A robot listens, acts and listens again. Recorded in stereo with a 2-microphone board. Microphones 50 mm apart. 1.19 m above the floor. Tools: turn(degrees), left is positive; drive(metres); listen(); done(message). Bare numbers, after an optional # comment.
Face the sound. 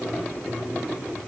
listen()
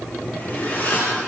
# The zipper: about 35° left or 145° left.
turn(35)
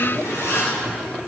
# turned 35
# So it is at 105° left.
turn(105)
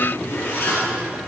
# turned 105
# The zipper is now 50° left.
turn(50)
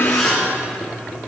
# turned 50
done("Facing the zipper.")